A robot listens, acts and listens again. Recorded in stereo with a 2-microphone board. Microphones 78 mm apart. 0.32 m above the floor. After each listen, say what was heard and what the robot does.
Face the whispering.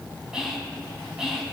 Turn 30° right.
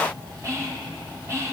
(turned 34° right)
So it is at 140° right. Turn 140° right.
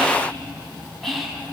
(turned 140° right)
Found it: whispering, straight ahead.